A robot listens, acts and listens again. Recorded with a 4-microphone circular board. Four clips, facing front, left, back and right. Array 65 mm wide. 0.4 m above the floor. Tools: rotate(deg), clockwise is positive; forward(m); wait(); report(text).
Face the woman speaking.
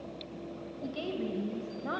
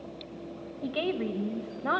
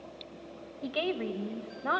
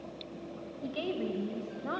rotate(-130)
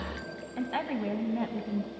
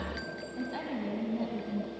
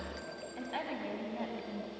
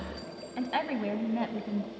rotate(75)
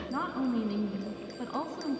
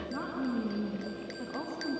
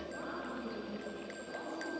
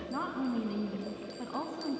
rotate(25)
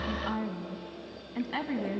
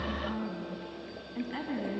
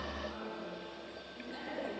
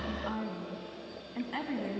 rotate(20)
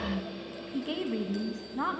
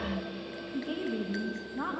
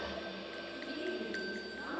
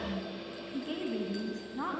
report("Facing the woman speaking, 2 to 4 m away.")